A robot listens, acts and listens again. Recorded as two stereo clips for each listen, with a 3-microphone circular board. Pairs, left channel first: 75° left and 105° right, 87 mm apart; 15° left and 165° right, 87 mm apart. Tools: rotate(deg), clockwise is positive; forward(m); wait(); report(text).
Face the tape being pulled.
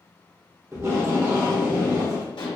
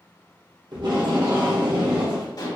rotate(155)
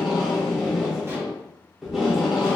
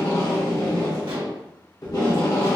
rotate(20)
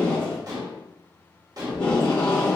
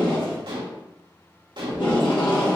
report("Found it: tape being pulled, straight ahead, 1 to 2 m away.")